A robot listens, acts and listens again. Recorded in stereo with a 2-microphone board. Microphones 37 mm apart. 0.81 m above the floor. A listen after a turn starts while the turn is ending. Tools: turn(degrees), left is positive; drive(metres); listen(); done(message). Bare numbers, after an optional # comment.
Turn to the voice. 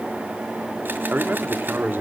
# The man speaking: about 70° right or 110° right.
turn(-70)
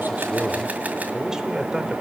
# So it is at 20° right.
turn(-20)
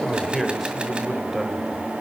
done("Facing the man speaking, 2 to 4 m away.")